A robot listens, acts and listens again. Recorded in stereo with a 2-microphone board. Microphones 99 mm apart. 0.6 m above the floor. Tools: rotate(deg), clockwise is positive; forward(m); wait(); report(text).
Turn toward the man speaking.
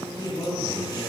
rotate(-45)
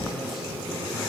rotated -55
wait()
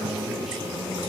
wait()
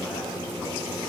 report("I heard a man speaking, but can't make it out now. It was about 10° right or 80° left.")